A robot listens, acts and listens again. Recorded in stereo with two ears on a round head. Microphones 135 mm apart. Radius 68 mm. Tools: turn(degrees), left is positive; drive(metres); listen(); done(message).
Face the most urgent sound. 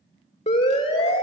turn(degrees=45)
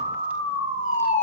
turn(degrees=75)
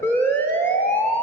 turn(degrees=20)
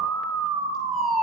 done("Found it: a siren, straight ahead.")